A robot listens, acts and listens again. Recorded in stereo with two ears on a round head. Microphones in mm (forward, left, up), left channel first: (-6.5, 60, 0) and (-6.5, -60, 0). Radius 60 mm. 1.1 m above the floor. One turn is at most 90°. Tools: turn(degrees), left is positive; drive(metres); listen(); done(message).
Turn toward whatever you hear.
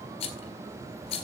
turn(degrees=50)
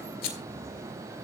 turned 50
turn(degrees=85)
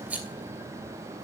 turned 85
turn(degrees=-10)
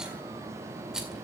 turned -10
listen()
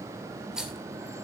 done("Facing the rattle.")